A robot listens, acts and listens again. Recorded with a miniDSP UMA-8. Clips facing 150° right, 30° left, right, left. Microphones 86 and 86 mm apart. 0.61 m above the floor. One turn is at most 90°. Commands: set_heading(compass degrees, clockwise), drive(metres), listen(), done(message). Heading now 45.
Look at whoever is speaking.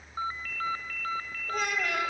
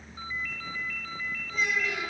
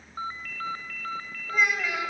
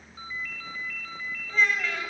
set_heading(135)
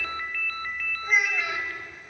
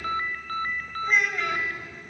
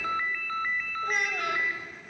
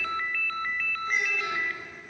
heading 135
set_heading(210)
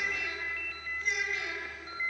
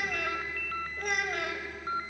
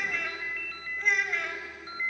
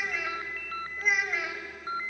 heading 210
done("Facing the child speaking.")